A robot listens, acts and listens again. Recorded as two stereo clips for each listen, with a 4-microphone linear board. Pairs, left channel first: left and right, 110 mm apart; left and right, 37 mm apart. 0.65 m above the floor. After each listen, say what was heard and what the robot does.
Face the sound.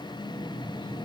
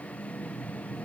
Keep listening.
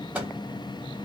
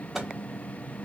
Turn 30° right.
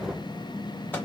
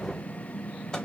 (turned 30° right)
So it is at 15° left. Turn 15° left.
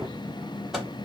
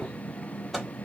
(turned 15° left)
Facing the microwave, 1 to 2 m away.